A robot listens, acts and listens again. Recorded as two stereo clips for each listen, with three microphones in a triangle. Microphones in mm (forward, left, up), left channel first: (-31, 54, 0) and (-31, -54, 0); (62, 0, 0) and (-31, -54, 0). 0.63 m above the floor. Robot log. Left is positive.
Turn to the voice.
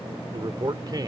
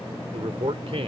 note: The man speaking: 135° right.
cmd yaw -135
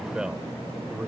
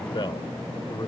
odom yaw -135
note: The man speaking is now 15° right.
cmd yaw -15
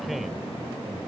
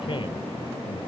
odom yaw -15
cmd idle
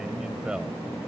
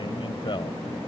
cmd idle
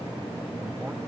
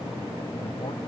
end: I heard a man speaking from this way, but can't make it out now.